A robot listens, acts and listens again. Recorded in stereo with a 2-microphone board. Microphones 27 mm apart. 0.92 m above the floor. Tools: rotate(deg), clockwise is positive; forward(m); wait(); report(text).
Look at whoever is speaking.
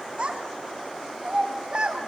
rotate(40)
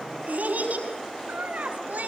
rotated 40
rotate(90)
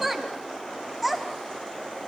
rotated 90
report("Facing the child speaking.")